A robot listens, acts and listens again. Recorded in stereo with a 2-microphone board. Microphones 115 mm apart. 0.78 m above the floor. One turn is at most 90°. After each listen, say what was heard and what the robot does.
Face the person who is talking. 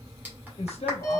The man speaking: about 65° left or 115° left. Turn 65° left.
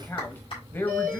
So it is at 20° left. Turn 20° left.
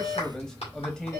Found it: a man speaking, straight ahead.